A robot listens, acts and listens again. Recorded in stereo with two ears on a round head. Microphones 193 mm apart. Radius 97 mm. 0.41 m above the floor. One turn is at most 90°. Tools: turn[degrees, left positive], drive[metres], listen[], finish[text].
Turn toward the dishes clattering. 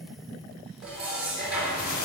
Action: turn[-30]
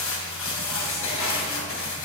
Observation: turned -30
Action: listen[]
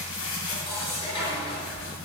Thought: So it is at 25° left.
Action: turn[25]
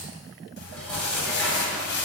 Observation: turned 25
Action: listen[]
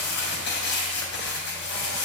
Action: listen[]
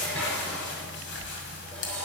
Action: finish[Facing the dishes clattering, over 4 m away.]